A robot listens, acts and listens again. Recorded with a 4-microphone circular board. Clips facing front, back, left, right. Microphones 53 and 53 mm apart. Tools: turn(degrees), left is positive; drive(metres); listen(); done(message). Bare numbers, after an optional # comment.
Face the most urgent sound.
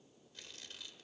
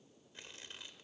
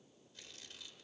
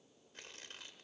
listen()
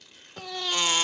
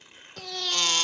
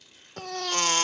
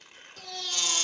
# The baby crying: 75° left.
turn(75)
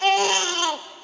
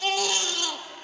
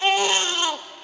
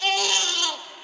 # The baby crying is now 30° left.
turn(30)
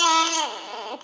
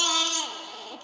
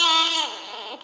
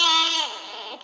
done("Found it: a baby crying, straight ahead.")